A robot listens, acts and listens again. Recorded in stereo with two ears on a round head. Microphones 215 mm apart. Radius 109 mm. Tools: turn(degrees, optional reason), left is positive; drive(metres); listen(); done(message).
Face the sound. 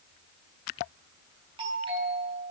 turn(degrees=-20, reason="The doorbell: about 20° right or 160° right.")
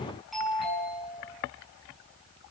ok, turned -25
done("Found it: a doorbell, straight ahead.")